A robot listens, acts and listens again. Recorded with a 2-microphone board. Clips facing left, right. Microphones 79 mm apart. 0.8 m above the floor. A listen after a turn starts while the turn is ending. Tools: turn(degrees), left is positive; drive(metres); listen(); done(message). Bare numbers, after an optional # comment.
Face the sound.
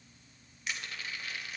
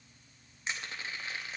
# The crushing: about 25° right or 155° right.
turn(-25)
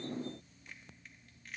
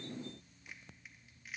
done("Facing the crushing, under 1 m away.")